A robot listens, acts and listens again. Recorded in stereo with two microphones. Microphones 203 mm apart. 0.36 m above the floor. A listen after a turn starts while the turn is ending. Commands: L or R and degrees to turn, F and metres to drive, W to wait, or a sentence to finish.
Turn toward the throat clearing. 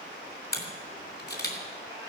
W
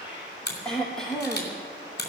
L30
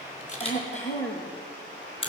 L145
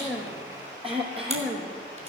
R30
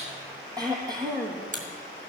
R20
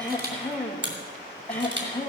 Facing the throat clearing, 2 to 4 m away.